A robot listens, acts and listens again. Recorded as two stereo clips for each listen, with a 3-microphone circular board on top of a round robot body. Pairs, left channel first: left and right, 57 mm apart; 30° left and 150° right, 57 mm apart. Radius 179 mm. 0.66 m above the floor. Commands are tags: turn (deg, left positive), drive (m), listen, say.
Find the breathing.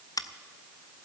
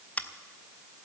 <listen/>
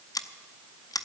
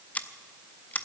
<listen/>
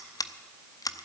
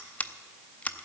<say>I can't make out breathing to turn to.</say>